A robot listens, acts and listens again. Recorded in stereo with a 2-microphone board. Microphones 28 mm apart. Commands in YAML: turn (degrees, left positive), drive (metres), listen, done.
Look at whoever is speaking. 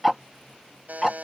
listen: true
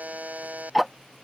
listen: true
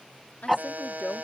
turn: 65
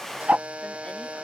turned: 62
listen: true
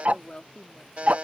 turn: 40
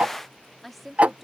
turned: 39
done: "Facing the woman speaking."